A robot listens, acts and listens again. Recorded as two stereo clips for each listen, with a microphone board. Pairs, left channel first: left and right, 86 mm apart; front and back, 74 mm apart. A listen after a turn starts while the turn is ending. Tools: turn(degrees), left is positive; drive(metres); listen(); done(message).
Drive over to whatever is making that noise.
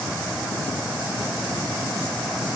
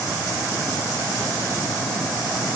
listen()
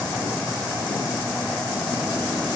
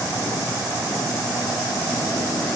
listen()
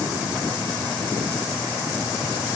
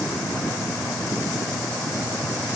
done("I can't make out anything.")